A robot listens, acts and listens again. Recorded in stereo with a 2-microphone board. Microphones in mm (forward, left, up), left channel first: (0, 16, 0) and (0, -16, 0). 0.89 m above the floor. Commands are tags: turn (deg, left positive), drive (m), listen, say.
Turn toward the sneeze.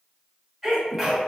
<turn deg="-30"/>
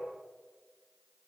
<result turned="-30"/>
<listen/>
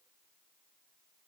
<say>I heard a sneeze, but can't make it out now. It was about 20° left or 140° right.</say>